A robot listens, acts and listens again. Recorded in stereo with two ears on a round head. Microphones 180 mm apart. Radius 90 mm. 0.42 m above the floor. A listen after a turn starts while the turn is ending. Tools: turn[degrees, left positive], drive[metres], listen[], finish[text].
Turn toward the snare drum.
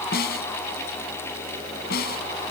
Thought: The snare drum: about 50° left or 130° left.
Action: turn[50]
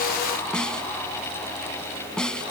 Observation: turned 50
Action: finish[Facing the snare drum.]